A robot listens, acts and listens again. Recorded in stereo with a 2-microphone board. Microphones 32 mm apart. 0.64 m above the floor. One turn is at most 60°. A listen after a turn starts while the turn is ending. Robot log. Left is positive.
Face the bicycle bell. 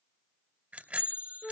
note: The bicycle bell: about 50° right or 130° right.
cmd yaw -50
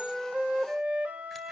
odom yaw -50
cmd idle
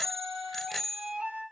end: Facing the bicycle bell, 2 to 4 m away.